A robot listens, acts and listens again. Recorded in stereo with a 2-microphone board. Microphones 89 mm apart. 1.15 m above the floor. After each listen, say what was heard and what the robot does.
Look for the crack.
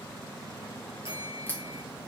The crack: about 20° left or 160° left. Turn 20° left.
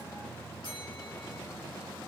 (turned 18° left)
Keep listening.
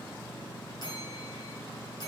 I heard a crack, but can't make it out now. It was about straight ahead or 140° left.